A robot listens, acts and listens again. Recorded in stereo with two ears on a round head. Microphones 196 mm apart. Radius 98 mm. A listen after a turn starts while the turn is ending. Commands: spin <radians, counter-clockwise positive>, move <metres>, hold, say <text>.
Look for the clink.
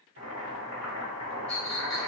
spin 0.52
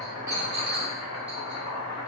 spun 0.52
spin -0.52
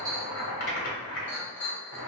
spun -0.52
spin 0.17
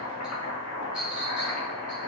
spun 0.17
say Facing the clink, 1 to 2 m away.